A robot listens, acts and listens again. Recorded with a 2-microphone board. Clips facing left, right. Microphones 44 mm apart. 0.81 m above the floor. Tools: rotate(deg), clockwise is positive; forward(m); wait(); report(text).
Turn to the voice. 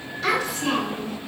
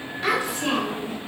rotate(20)
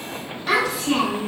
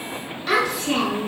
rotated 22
report("Found it: a child speaking, straight ahead, 1 to 2 m away.")